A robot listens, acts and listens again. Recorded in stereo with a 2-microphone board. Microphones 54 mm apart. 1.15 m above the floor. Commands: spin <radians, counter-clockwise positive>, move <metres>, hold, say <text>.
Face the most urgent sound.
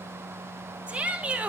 spin -0.35
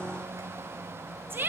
spin -2.44
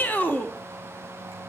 spin 0.61
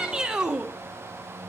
spin -0.26
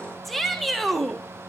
say Found it: a shout, straight ahead.